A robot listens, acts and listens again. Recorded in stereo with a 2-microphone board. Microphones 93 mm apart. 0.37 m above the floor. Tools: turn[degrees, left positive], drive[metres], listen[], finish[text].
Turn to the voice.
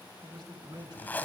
Thought: The man speaking: about 55° right or 125° right.
Action: turn[-55]
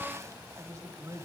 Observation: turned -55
Thought: So it is at 45° right.
Action: turn[-45]
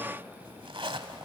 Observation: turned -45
Action: listen[]
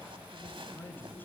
Thought: The man speaking is now 25° left.
Action: turn[25]
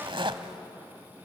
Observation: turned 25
Action: listen[]
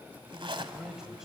Action: finish[Facing the man speaking, 1 to 2 m away.]